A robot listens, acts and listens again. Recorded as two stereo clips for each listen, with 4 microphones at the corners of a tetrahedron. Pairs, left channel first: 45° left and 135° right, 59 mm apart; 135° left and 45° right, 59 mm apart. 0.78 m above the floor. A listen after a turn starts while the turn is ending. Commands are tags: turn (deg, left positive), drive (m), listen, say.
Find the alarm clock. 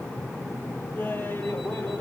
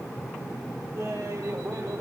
<listen/>
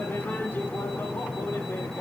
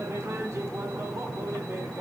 <listen/>
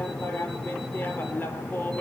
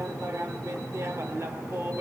<say>I can't make out an alarm clock to turn to.</say>